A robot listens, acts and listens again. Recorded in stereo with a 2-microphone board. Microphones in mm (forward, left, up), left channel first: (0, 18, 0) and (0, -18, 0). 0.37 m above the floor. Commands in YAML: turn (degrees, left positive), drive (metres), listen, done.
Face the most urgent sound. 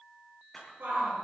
turn: -75
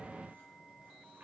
listen: true
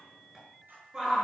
turn: -20
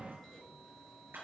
listen: true
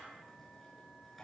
listen: true
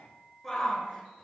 done: "Found it: a shout, straight ahead."